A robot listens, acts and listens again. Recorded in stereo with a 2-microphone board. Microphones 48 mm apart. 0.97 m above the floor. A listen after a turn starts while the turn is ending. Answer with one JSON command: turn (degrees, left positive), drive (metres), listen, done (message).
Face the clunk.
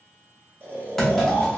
{"turn": 30}
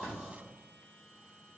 {"listen": true}
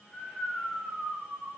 {"done": "I heard a clunk, but can't make it out now. It was about 25° right or 145° left."}